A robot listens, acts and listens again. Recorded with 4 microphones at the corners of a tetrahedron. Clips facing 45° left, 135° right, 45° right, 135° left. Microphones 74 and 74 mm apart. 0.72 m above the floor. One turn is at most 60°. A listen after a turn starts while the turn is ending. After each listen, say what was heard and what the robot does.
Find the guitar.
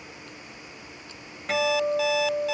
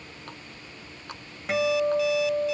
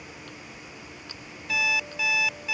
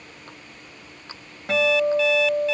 The guitar: 140° left. Turn 60° left.
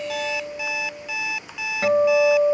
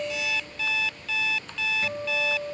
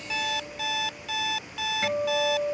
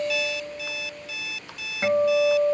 The guitar is now 75° left. Turn 60° left.
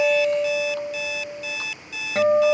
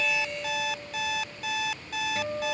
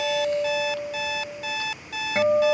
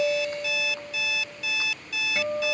The guitar is now 15° left. Turn 15° left.
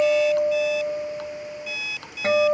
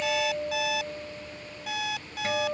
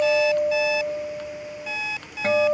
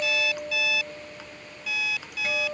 Facing the guitar.